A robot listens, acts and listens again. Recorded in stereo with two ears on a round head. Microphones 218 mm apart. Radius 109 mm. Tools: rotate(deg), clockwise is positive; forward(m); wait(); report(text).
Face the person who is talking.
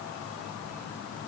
wait()
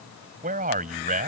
rotate(35)
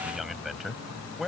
report("Facing the man speaking.")